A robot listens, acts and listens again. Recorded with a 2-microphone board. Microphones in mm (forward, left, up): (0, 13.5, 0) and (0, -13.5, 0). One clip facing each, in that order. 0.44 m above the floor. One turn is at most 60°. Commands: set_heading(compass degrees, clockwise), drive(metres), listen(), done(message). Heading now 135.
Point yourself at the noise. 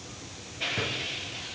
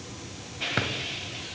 set_heading(195)
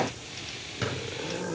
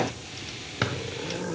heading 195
set_heading(235)
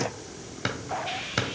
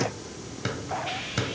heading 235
set_heading(215)
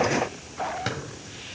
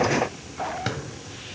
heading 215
done("Facing the drawer, 1 to 2 m away.")